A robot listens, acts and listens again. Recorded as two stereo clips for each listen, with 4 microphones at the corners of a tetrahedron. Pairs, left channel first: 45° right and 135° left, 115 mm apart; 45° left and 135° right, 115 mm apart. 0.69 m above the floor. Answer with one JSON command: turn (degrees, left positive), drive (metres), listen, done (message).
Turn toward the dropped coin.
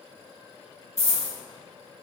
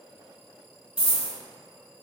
{"turn": 75}
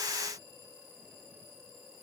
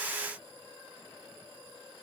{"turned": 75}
{"done": "I heard a dropped coin from this way, but can't make it out now."}